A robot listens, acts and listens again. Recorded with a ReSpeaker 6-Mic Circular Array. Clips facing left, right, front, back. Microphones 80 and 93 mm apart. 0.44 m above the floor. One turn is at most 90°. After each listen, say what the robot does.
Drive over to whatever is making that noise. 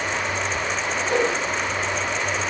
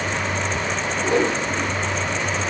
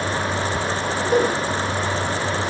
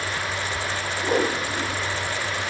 Turn 90° right.
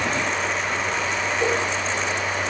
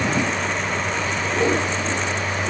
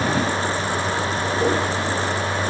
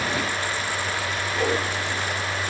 Turn 90° right.
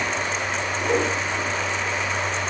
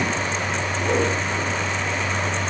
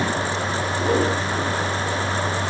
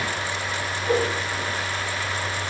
Drive 1.0 m forward.
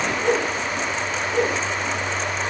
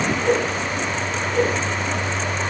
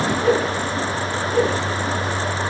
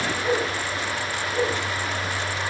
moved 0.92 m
Drive 1.0 m forward.
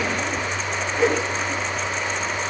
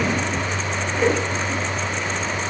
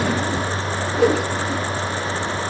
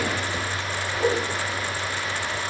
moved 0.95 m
Drive 1.0 m forward.
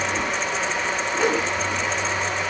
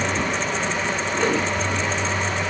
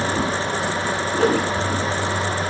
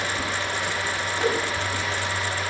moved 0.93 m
Turn 10° left.
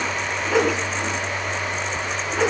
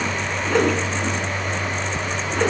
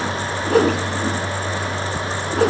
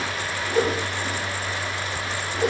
Drive 1.0 m forward.
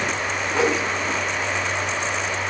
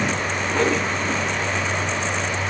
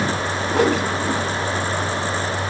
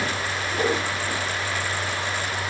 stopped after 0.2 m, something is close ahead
Arrived at the whoosh, straight ahead.